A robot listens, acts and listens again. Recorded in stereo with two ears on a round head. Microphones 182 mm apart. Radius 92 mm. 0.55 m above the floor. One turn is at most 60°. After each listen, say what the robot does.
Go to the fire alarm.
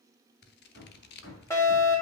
Turn 15° left.
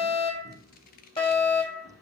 Turn 60° left.
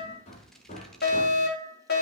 Turn 60° left.
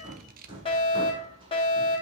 Turn 35° left.
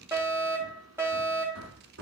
Turn 15° right.
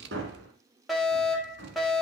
Drive 1.0 m forward.
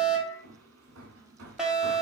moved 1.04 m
Drive 1.0 m forward.
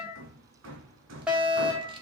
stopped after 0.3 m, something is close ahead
Turn 10° right.
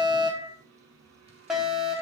I am next to the fire alarm.